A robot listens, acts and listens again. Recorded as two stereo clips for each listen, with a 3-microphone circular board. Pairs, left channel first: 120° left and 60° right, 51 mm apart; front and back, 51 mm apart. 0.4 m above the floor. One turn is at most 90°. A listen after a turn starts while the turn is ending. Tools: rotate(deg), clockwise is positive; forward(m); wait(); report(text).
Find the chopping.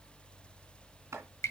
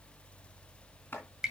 rotate(50)
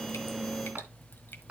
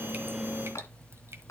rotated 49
report("Found it: chopping, straight ahead, 2 to 4 m away.")